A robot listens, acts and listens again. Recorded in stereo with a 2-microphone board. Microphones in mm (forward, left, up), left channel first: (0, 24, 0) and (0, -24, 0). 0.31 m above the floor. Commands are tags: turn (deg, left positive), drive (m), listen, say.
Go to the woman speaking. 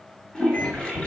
<listen/>
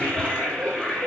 <listen/>
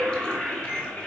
<say>I can't make out a woman speaking to turn to.</say>